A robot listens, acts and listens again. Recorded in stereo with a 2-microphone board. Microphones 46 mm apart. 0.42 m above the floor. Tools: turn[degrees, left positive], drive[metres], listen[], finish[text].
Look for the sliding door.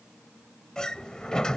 Thought: The sliding door: about 15° left or 165° left.
Action: turn[15]
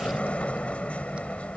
Thought: So it is at 150° left.
Action: turn[150]
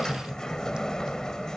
Thought: The sliding door is now 15° left.
Action: turn[15]
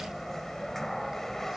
Action: finish[Found it: a sliding door, straight ahead.]